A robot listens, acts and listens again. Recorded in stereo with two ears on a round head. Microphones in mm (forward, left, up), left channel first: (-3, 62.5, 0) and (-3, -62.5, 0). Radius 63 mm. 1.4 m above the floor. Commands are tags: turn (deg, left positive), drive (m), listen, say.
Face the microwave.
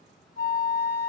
<listen/>
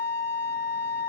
<listen/>
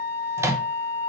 <turn deg="-20"/>
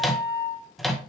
<say>Found it: a microwave, straight ahead.</say>